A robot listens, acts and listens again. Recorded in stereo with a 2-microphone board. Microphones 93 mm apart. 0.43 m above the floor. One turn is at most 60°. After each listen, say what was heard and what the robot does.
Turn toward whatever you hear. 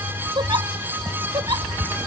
The giggle: about 50° right or 130° right. Turn 50° right.
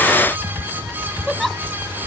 Found it: a giggle, straight ahead.